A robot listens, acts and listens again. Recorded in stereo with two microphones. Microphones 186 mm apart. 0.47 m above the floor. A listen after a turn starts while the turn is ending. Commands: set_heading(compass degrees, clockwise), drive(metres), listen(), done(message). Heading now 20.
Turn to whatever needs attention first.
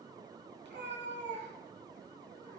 listen()
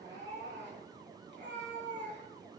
listen()
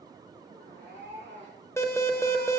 set_heading(350)
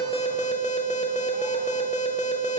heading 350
set_heading(215)
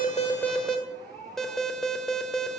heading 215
done("Found it: an alarm, straight ahead.")